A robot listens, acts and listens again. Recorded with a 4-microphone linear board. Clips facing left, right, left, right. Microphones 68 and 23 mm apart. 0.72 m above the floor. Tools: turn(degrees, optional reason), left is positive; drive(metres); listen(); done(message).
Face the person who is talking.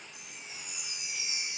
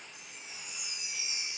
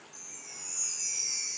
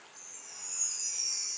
listen()
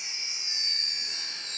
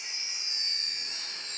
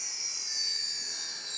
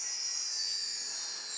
listen()
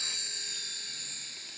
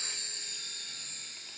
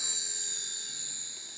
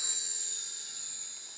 done("I can't make out anyone speaking to turn to.")